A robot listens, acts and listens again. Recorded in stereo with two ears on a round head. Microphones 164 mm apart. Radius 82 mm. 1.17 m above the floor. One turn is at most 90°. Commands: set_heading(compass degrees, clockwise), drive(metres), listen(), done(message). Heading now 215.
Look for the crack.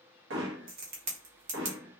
set_heading(265)
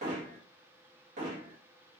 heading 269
listen()
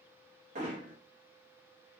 done("I heard a crack, but can't make it out now. It was about 5° left or 75° right.")